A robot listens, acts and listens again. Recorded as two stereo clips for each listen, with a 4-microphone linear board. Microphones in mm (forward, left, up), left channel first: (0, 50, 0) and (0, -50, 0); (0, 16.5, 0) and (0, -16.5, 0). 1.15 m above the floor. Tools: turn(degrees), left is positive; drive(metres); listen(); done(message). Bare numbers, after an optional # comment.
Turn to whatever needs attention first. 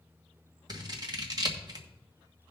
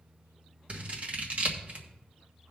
listen()
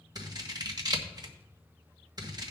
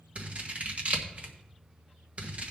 listen()
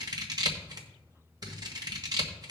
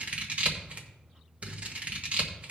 done("I can't make out anything urgent to turn to.")